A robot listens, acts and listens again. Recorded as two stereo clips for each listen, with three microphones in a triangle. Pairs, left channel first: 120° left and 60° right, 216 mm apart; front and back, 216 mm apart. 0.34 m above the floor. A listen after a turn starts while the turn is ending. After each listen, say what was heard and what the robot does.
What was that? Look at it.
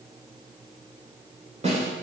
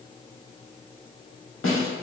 Facing the snare drum.